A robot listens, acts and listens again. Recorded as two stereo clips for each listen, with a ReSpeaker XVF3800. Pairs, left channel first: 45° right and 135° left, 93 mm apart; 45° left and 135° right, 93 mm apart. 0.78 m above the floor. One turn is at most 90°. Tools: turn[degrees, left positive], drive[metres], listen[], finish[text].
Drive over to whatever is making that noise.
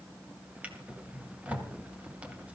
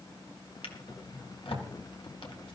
Thought: The drawer: 60° left.
Action: turn[60]
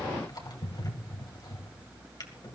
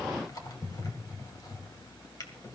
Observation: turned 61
Action: drive[1.0]
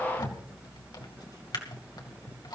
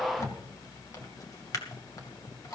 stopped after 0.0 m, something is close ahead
Action: finish[Blocked. The drawer is further on, straight ahead.]